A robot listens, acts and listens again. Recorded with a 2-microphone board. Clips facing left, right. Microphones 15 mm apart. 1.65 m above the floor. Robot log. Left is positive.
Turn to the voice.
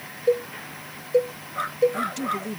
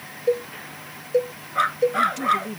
cmd yaw +30
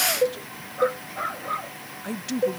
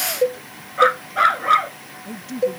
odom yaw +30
note: So it is at 145° left.
cmd yaw +145
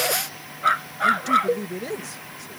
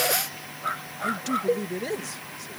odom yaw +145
note: The man speaking is now 10° right.
cmd yaw -10
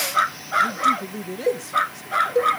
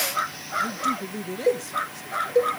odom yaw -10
end: Found it: a man speaking, straight ahead.